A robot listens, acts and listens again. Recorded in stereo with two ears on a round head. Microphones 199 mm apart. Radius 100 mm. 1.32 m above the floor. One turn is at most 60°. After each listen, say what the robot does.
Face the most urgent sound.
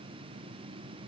Keep listening.
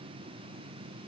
Keep listening.
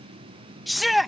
Turn 30° left.
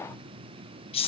Turn 60° left.
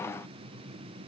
Turn 60° left.
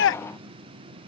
Turn 60° left.
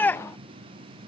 Turn 10° left.
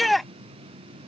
Found it: a shout, straight ahead.